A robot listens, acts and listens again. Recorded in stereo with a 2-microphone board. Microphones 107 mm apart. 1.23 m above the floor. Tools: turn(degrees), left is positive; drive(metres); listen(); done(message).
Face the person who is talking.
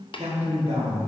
turn(degrees=-65)
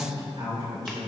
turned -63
turn(degrees=-45)
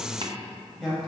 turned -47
done("Found it: a man speaking, straight ahead, 2 to 4 m away.")